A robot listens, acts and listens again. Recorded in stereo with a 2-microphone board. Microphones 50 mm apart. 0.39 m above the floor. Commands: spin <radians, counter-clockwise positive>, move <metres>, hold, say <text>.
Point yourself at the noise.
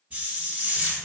spin -0.52
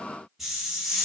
say Found it: a hiss, straight ahead.